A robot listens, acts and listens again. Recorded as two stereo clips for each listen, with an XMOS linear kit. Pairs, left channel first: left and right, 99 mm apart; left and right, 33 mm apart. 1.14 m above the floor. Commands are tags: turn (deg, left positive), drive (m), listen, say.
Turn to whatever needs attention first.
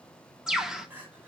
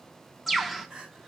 <turn deg="-20"/>
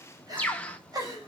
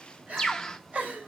<turn deg="-140"/>
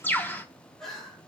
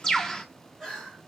<say>Found it: crying, straight ahead.</say>